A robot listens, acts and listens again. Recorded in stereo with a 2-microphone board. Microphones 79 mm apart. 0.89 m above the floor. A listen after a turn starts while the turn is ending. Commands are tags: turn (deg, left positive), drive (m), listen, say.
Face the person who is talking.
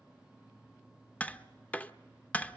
<listen/>
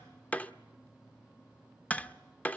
<listen/>
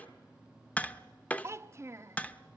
<turn deg="-35"/>
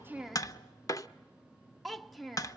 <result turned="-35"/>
<say>Found it: a child speaking, straight ahead, under 1 m away.</say>